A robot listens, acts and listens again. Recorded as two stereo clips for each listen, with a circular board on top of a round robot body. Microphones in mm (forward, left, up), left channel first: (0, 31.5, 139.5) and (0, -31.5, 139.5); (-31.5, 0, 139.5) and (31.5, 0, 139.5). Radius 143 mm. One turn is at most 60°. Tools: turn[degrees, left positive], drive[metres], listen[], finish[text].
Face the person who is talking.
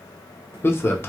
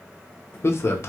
Thought: The man speaking: 135° left.
Action: turn[60]
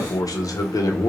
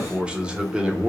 Thought: The man speaking is now 75° left.
Action: turn[60]
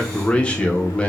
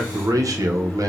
Thought: The man speaking is now 15° left.
Action: turn[15]
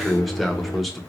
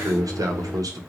Action: finish[Facing the man speaking, under 1 m away.]